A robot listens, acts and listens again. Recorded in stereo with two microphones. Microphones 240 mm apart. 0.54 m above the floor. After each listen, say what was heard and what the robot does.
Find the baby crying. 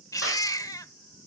Turn 30° left.
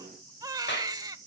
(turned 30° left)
So it is at 15° right. Turn 15° right.
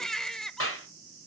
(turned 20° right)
Found it: a baby crying, straight ahead.